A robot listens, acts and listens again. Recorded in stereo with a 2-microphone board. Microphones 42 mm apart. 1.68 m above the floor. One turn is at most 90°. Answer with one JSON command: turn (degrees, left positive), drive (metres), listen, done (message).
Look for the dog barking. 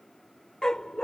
{"turn": 20}
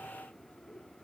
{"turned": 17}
{"listen": true}
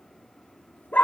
{"turn": 40}
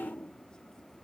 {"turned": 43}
{"listen": true}
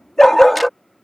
{"done": "Facing the dog barking."}